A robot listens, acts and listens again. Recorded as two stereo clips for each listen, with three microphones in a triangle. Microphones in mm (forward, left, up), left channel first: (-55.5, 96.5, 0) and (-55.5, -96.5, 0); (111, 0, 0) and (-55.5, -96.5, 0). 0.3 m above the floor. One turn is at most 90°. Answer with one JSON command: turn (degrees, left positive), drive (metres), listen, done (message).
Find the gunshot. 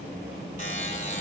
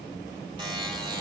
{"listen": true}
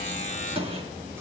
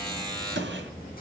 {"turn": -90}
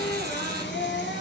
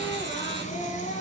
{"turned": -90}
{"turn": -60}
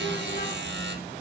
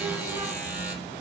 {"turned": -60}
{"done": "I heard a gunshot from this way, but can't make it out now."}